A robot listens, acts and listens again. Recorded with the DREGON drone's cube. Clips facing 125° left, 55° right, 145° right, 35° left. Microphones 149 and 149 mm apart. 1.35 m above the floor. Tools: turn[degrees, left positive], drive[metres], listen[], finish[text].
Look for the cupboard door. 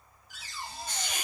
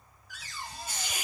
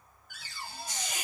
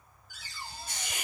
Thought: The cupboard door: 175° right.
Action: turn[-175]
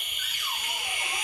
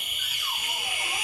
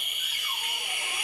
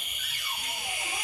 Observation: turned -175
Action: listen[]
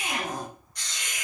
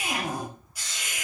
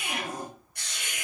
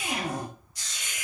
Thought: The cupboard door is now 25° left.
Action: turn[25]
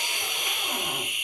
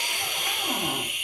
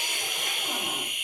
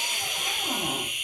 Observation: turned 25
Action: listen[]
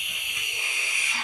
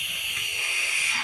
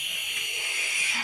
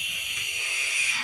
Action: listen[]
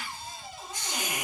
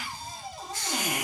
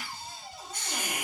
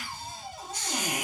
Action: finish[Facing the cupboard door.]